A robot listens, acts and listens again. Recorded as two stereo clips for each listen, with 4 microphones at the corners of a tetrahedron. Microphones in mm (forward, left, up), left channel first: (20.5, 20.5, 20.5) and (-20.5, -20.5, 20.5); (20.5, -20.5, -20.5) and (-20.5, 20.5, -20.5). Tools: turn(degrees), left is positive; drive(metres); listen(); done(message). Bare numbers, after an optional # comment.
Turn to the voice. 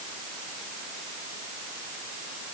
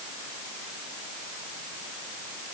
listen()
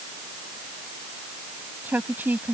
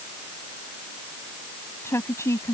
# The woman speaking: 80° right.
turn(-80)
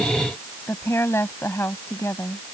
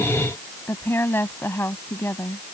done("Found it: a woman speaking, straight ahead.")